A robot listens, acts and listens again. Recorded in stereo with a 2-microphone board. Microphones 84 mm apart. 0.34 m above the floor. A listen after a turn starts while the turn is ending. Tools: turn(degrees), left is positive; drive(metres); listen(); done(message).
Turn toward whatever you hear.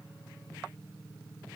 listen()
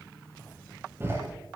turn(degrees=-30)
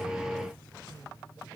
listen()
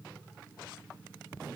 done("I heard a door slam, but can't make it out now. It was about straight ahead or 120° right.")